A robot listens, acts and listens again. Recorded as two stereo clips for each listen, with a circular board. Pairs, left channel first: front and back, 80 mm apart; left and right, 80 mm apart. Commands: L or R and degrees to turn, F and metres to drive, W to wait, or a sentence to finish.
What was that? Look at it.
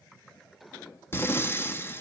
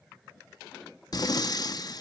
L60
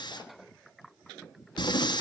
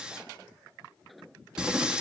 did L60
R10
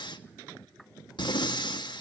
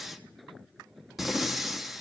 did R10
Found it: breathing, straight ahead, 1 to 2 m away.